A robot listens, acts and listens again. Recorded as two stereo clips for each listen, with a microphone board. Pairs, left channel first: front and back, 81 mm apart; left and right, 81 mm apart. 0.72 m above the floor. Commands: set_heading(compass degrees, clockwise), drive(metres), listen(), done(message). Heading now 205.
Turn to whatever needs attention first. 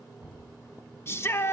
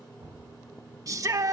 set_heading(255)
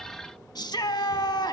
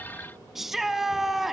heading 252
done("Found it: a shout, straight ahead, under 1 m away.")